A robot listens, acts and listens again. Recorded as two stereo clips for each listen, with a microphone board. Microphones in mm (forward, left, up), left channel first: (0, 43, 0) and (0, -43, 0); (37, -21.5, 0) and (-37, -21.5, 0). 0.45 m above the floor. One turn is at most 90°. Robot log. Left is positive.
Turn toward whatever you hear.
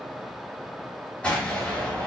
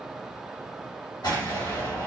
note: The explosion: 15° left.
cmd yaw +15
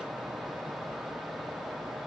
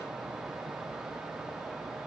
end: I heard an explosion from this way, but can't make it out now.